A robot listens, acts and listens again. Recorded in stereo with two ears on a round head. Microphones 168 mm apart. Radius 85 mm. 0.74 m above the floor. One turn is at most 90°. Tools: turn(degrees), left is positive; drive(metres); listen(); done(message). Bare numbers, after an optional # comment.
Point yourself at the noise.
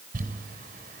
# The crumpling: about 45° right or 135° right.
turn(-45)
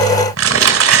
# So it is at 85° right.
turn(-85)
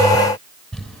done("Found it: crumpling, straight ahead, 2 to 4 m away.")